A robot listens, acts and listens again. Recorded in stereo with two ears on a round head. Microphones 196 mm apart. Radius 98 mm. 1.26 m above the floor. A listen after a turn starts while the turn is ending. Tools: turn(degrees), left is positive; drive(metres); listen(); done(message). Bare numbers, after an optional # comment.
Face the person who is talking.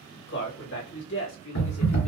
# The man speaking: about 65° left or 115° left.
turn(65)
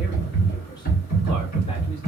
listen()
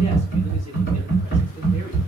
listen()
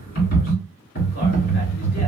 done("I heard a man speaking, but can't make it out now. It was about straight ahead or 50° left.")